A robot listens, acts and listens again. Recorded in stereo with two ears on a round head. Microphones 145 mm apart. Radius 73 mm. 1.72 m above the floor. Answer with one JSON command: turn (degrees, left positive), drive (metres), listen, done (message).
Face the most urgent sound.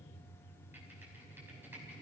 {"listen": true}
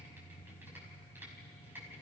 {"listen": true}
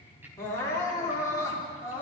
{"turn": 20}
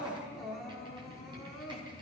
{"done": "Found it: crying, straight ahead."}